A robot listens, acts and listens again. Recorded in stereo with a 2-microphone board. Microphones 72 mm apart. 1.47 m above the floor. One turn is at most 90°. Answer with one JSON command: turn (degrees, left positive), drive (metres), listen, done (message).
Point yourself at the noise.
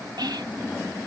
{"turn": -90}
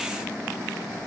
{"listen": true}
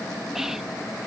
{"done": "Found it: whispering, straight ahead."}